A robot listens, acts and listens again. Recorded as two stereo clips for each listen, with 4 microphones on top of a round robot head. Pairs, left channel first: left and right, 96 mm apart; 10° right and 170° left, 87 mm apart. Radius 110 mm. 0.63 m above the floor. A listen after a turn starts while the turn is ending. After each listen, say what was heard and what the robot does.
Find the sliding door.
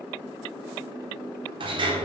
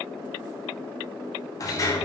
The sliding door: 60° right. Turn 60° right.
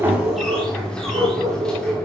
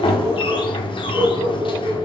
The sliding door is now 10° left. Turn 10° left.
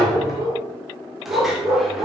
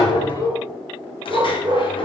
Keep listening.
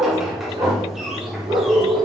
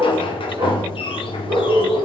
Facing the sliding door, 1 to 2 m away.